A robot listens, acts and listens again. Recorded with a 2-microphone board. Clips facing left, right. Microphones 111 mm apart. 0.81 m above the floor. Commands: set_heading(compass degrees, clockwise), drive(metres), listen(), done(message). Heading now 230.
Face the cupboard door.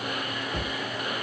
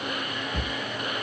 set_heading(200)
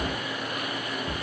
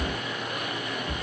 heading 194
set_heading(79)
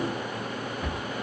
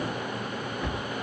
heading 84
done("Found it: a cupboard door, straight ahead.")